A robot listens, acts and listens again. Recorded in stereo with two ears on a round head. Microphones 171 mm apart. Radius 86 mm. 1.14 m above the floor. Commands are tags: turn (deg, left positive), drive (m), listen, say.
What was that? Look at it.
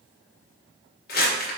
<turn deg="55"/>
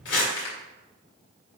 <turn deg="65"/>
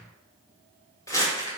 <turn deg="20"/>
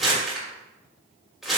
<say>Found it: crumpling, straight ahead.</say>